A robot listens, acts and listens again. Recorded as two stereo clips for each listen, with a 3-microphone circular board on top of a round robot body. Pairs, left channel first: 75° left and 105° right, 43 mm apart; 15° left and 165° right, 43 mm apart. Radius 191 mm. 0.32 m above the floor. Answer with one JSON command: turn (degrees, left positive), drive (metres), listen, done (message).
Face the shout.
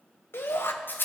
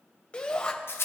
{"turn": 75}
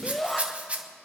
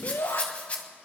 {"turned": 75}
{"turn": -10}
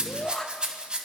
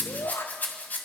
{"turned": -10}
{"done": "Facing the shout, 2 to 4 m away."}